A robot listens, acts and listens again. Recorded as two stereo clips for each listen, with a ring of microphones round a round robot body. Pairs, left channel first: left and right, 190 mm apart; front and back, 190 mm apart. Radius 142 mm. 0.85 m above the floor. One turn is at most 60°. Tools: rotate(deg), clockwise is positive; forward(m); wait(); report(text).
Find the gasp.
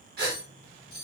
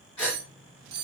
rotate(60)
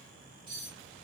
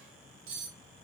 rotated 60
rotate(10)
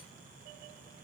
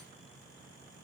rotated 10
report("I heard a gasp from this way, but can't make it out now.")